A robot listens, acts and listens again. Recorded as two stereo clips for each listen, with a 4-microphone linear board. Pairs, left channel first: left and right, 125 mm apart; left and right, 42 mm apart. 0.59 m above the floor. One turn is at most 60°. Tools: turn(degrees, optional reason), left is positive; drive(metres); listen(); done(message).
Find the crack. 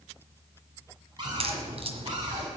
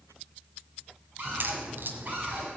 turn(degrees=-55, reason="The crack: about 55° right or 125° right.")
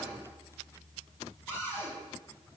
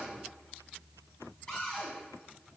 listen()
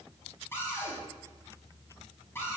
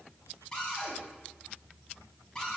done("I heard a crack, but can't make it out now. It was about straight ahead or 70° right.")